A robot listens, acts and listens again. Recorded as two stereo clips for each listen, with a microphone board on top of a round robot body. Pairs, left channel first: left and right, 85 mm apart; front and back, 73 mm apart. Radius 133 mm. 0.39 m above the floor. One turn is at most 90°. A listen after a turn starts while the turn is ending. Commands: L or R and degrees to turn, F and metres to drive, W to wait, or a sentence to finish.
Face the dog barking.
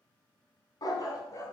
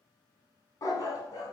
L35
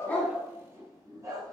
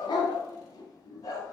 R45
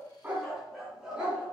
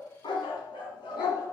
R10
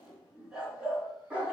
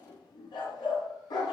R15
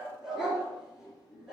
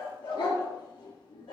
Found it: a dog barking, straight ahead.